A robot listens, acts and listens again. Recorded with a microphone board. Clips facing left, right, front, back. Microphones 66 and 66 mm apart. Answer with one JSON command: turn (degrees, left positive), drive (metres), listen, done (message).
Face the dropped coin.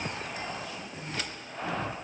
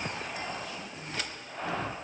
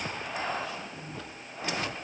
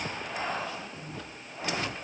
{"listen": true}
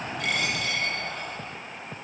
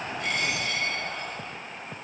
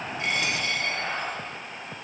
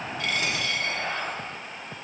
{"turn": 65}
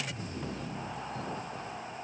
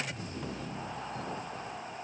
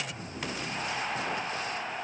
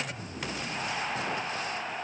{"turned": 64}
{"done": "Facing where the dropped coin came from. I can't hear it now."}